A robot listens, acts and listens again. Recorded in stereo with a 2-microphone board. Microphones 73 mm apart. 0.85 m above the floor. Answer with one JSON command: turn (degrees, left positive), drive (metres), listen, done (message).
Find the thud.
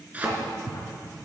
{"turn": -20}
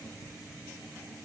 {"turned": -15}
{"listen": true}
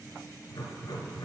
{"done": "I heard a thud, but can't make it out now. It was about 5° right or 145° right."}